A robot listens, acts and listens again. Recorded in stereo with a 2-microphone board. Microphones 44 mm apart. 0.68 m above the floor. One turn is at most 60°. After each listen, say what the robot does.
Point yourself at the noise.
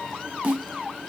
Turn 35° right.
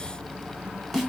Facing the snare drum, 1 to 2 m away.